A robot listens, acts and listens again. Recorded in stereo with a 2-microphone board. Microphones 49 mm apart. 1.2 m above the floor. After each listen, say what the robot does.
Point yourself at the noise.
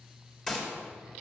Turn 30° left.
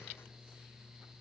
Keep listening.
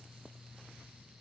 I heard a gunshot, but can't make it out now. It was about 20° right or 140° left.